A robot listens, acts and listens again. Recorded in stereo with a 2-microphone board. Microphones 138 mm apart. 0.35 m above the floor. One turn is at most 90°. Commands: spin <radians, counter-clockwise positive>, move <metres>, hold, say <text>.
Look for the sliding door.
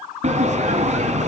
spin -1.05
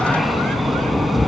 say Facing the sliding door, 1 to 2 m away.